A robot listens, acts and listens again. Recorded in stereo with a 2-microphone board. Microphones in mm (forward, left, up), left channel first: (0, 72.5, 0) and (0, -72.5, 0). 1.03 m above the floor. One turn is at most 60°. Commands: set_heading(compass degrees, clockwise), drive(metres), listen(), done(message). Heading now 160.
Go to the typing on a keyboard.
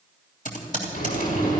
set_heading(100)
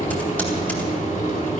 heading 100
listen()
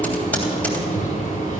listen()
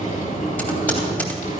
set_heading(90)
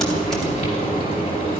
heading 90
listen()
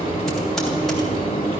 listen()
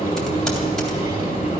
done("I heard typing on a keyboard from this way, but can't make it out now. I did not reach it.")